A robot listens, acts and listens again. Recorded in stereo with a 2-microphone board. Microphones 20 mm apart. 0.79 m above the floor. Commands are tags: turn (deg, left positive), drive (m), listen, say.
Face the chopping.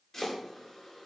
<turn deg="30"/>
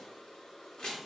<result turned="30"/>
<turn deg="135"/>
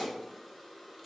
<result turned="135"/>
<turn deg="30"/>
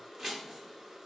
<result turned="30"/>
<turn deg="-10"/>
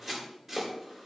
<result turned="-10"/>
<say>Found it: chopping, straight ahead.</say>